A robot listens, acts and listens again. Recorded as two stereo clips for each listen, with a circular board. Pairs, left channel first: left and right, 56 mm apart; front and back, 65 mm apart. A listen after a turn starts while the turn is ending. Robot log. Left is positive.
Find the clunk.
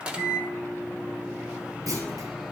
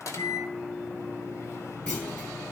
note: The clunk: 75° right.
cmd yaw -75
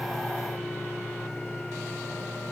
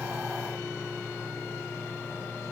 end: I heard a clunk from this way, but can't make it out now.